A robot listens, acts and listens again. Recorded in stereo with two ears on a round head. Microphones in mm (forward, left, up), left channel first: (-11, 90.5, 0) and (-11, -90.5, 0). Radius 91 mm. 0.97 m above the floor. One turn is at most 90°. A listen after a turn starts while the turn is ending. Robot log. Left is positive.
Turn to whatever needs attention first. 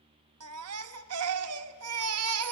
cmd yaw -90
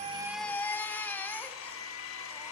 note: So it is at 10° left.
cmd yaw +10
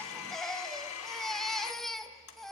end: Facing the baby crying, under 1 m away.